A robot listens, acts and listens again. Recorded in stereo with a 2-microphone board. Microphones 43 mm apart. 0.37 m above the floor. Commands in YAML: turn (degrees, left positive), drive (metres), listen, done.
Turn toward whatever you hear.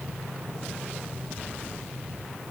listen: true
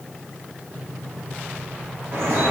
turn: -75
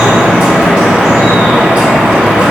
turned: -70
turn: -25
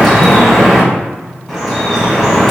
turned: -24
done: "Facing the dripping, 1 to 2 m away."